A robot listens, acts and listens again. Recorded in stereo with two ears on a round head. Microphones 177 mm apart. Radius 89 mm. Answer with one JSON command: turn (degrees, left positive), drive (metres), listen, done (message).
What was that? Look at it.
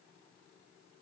{"listen": true}
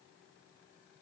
{"listen": true}
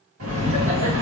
{"turn": -70}
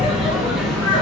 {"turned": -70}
{"done": "Found it: laughter, straight ahead, 2 to 4 m away."}